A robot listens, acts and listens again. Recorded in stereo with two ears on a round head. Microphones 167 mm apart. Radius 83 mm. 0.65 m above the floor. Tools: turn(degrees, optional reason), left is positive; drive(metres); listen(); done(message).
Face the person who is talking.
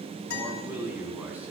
turn(degrees=-30)
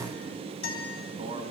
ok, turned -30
turn(degrees=-145, reason="So it is at 145° right.")
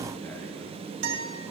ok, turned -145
listen()
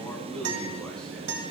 done("Found it: a man speaking, straight ahead, over 4 m away.")